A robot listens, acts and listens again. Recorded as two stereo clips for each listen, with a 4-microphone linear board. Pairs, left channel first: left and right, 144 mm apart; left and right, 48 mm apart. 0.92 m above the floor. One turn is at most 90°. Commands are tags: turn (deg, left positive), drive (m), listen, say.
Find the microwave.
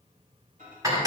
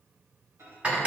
<turn deg="-90"/>
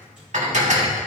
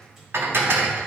<listen/>
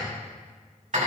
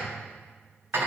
<listen/>
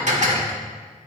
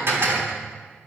<say>I heard a microwave from this way, but can't make it out now.</say>